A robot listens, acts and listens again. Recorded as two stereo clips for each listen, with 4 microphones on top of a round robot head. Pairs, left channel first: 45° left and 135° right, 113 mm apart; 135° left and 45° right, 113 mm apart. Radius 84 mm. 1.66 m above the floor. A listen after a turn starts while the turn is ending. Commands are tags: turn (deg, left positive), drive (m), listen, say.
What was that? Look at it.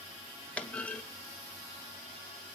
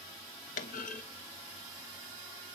<turn deg="120"/>
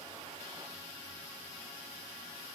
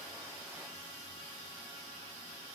<say>Facing where the clunk came from. I can't hear it now.</say>